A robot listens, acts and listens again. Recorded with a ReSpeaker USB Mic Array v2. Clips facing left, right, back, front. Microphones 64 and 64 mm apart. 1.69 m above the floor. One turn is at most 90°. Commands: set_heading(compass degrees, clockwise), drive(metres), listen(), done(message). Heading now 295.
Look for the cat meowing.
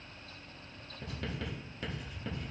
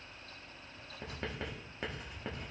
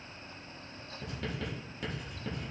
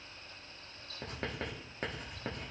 listen()
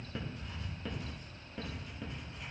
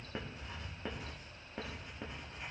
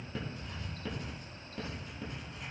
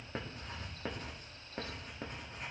listen()
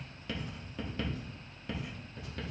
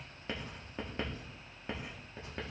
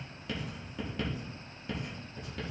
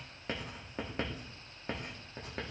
done("I can't make out a cat meowing to turn to.")